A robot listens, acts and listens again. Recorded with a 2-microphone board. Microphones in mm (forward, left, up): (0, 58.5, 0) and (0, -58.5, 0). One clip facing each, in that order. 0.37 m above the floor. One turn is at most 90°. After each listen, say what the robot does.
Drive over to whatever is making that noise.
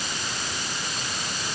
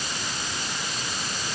Keep listening.
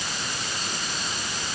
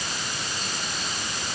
Keep listening.
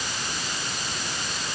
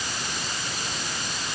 I can't make out anything to turn to.